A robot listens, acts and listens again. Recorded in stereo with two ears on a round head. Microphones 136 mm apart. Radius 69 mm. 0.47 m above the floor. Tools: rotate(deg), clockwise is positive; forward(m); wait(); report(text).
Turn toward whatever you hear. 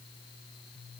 wait()
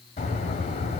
rotate(-45)
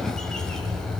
report("Facing the bird.")